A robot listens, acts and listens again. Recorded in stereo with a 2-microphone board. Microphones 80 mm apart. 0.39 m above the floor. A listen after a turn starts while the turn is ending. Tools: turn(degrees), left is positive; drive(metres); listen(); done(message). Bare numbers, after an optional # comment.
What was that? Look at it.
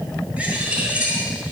# The bird: about 20° right or 160° right.
turn(-20)
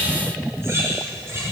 # So it is at 140° right.
turn(-140)
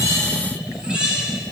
# The bird is now 10° right.
turn(-10)
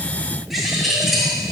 done("Found it: a bird, straight ahead.")